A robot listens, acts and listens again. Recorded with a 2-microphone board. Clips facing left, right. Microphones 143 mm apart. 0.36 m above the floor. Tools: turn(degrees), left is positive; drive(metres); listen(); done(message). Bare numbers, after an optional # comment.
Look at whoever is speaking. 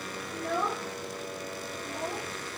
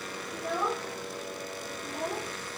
turn(-30)
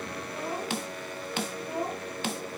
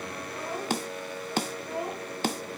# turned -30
# So it is at 15° left.
turn(15)
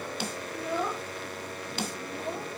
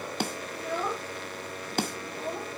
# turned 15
done("Found it: a child speaking, straight ahead.")